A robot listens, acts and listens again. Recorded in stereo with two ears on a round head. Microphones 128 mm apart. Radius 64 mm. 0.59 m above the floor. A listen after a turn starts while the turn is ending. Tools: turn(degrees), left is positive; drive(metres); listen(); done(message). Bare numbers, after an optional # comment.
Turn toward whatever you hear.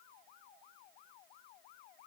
listen()
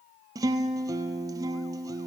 # The guitar: about 25° right or 155° right.
turn(-25)
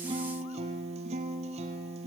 # So it is at 125° right.
turn(-125)
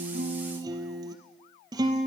# The guitar is now 30° right.
turn(-30)
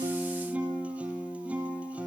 # The guitar is now 10° right.
turn(-10)
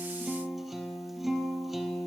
done("Facing the guitar, 2 to 4 m away.")